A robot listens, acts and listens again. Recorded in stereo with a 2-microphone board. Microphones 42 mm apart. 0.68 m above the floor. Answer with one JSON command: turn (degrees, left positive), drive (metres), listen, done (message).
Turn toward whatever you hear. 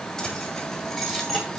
{"turn": -30}
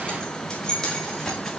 {"turn": 30}
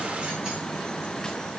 {"listen": true}
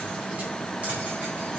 {"listen": true}
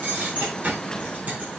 {"turn": -40}
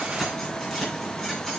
{"turn": 10}
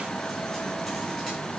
{"listen": true}
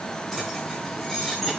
{"done": "Found it: keys jangling, straight ahead."}